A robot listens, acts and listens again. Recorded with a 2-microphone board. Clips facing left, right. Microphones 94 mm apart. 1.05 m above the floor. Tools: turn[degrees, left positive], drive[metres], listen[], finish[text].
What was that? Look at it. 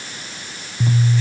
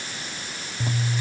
Action: turn[-30]
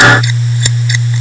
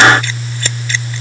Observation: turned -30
Thought: So it is at 15° left.
Action: turn[15]
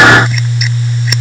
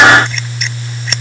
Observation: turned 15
Action: finish[Facing the scissors.]